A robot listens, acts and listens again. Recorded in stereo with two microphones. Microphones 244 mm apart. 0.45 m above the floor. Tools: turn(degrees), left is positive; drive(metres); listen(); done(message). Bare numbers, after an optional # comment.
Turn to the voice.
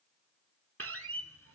listen()
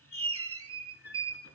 listen()
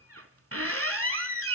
done("I can't make out anyone speaking to turn to.")